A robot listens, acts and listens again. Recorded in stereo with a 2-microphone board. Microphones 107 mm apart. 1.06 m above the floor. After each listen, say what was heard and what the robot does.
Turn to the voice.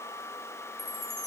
Keep listening.
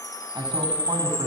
The man speaking: about 45° right or 135° right. Turn 45° right.
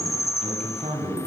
So it is at 85° right. Turn 85° right.
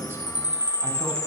The man speaking is now 20° right. Turn 20° right.
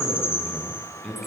Found it: a man speaking, straight ahead, over 4 m away.